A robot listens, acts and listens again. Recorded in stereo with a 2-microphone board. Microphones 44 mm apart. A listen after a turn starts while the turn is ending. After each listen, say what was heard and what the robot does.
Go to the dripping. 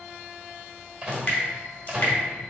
The dripping: about 50° left or 130° left. Turn 50° left.
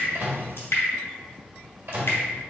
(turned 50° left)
So it is at 75° left. Turn 75° left.
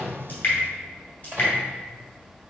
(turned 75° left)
The dripping is now 35° left. Turn 35° left.
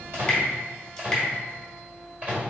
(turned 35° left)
Keep listening.
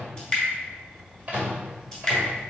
The dripping is now 10° left. Turn 10° left.
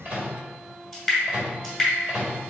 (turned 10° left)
Drive 1.0 m forward.
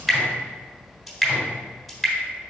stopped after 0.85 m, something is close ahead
I am next to the dripping.